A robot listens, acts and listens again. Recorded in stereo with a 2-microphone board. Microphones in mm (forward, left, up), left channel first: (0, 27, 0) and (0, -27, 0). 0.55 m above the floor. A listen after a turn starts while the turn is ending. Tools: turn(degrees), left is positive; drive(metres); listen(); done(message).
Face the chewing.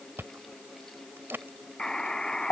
turn(degrees=-50)
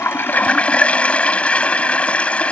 listen()
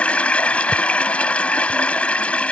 listen()
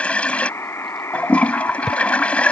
done("Found it: chewing, straight ahead.")